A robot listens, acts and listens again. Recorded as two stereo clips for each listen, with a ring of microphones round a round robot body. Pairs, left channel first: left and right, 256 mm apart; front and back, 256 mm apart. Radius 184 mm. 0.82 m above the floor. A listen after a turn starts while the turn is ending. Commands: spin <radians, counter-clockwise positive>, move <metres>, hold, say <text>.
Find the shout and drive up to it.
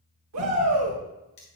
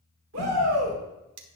spin -2.18
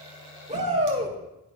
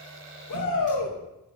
spin -0.44
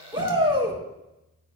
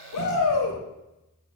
spin -0.35
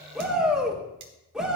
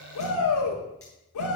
move 1.0
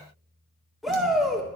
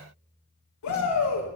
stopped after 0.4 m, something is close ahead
say Blocked. The shout is further on, straight ahead.